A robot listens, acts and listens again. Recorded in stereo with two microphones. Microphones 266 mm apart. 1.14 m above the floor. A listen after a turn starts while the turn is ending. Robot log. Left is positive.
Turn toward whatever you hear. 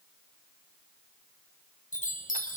note: The chime: about 30° left or 150° left.
cmd yaw +30
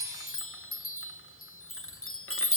note: So it is at 115° left.
cmd yaw +115
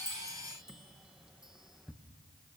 end: Facing the chime.